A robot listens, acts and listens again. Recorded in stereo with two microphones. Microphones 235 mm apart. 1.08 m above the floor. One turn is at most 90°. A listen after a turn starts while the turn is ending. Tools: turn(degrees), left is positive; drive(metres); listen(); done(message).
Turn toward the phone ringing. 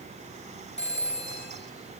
turn(degrees=50)
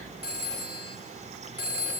turn(degrees=80)
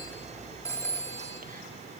turn(degrees=10)
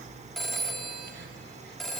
done("Facing the phone ringing, 2 to 4 m away.")